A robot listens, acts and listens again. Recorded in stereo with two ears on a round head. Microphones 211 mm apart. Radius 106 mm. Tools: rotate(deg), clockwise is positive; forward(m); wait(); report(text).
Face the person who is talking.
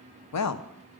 rotate(-90)
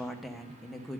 report("Facing the woman speaking, under 1 m away.")